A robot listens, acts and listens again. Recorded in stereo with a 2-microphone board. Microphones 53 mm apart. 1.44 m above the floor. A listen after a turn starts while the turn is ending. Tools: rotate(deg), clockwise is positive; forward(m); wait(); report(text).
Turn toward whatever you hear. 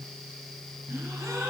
rotate(90)
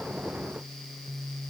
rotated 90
report("I heard a gasp from this way, but can't make it out now.")